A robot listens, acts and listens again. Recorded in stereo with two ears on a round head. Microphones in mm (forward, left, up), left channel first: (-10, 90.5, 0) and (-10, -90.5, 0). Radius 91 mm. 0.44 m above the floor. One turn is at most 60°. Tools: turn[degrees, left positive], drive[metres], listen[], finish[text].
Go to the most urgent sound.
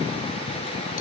Action: listen[]
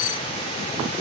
Action: listen[]
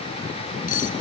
Action: finish[I can't make out anything urgent, only cutlery clinking.]